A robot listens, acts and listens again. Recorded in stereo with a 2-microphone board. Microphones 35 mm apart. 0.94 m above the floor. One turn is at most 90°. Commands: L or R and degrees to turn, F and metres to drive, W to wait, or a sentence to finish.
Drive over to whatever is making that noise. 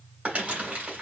R40
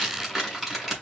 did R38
F1.0
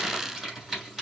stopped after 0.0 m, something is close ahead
Blocked. The crumpling is further on, straight ahead.